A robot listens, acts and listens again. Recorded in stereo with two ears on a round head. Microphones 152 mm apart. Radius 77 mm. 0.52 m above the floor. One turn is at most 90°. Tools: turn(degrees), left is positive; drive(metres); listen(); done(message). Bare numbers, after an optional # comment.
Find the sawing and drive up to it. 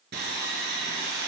# The sawing: about 70° right or 110° right.
turn(-70)
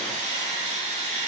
# So it is at 45° right.
turn(-45)
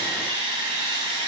# The sawing is now 30° right.
turn(-30)
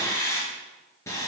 # The sawing is now 15° left.
turn(15)
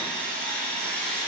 drive(1.0)
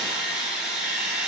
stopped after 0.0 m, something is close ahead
done("Something is in my way. I am facing the sawing but have not reached it.")